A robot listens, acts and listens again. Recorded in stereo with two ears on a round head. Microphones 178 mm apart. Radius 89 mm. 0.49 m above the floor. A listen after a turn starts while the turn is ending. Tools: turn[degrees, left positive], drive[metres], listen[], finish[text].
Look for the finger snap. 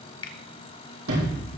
Thought: The finger snap: about 25° left or 155° left.
Action: turn[25]
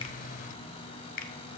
Thought: So it is at 120° left.
Action: turn[120]
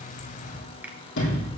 Thought: The finger snap is now 10° right.
Action: turn[-10]
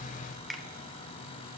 Action: finish[Found it: a finger snap, straight ahead, under 1 m away.]